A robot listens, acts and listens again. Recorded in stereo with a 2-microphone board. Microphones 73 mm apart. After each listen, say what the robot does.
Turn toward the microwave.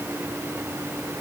Keep listening.
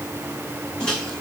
Turn 30° left.
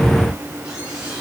Keep listening.
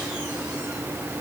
Keep listening.
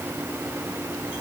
I heard a microwave, but can't make it out now. It was about 20° right or 140° left.